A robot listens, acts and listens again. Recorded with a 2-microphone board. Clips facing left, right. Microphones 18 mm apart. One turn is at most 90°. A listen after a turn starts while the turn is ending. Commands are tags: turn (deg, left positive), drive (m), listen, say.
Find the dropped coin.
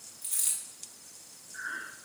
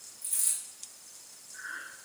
<turn deg="40"/>
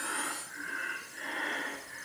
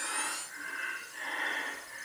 <listen/>
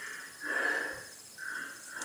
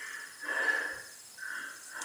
<say>I heard a dropped coin, but can't make it out now. It was about straight ahead or 100° left.</say>